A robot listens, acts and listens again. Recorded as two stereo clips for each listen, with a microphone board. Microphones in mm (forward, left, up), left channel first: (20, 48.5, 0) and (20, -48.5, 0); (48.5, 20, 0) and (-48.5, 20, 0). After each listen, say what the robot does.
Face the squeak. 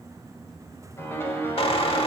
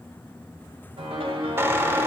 Turn 115° left.
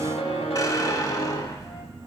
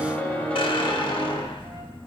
Turn 35° left.
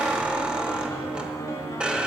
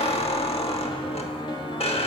Turn 10° right.
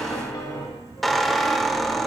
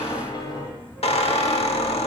Found it: a squeak, straight ahead, 1 to 2 m away.